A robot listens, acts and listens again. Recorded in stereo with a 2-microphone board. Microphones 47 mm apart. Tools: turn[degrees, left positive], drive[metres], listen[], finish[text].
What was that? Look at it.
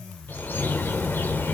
Thought: The bird: about 45° left or 135° left.
Action: turn[45]
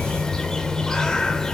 Thought: So it is at 15° left.
Action: turn[15]
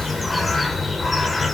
Action: finish[Found it: a bird, straight ahead, 1 to 2 m away.]